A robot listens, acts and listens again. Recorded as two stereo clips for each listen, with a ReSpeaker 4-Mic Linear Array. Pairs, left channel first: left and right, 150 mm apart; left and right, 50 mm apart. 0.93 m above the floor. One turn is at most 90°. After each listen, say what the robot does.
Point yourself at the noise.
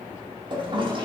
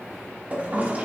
Turn 35° right.
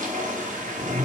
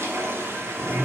Turn 90° right.
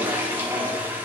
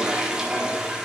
Turn 15° right.
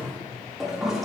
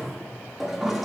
Facing the toilet flushing.